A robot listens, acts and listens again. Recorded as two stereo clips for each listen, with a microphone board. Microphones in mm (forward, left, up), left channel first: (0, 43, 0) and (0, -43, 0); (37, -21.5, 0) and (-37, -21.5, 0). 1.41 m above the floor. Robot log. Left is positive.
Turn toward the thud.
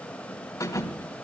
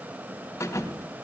note: The thud: 45° left.
cmd yaw +45
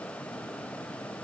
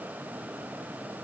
end: I heard a thud from this way, but can't make it out now.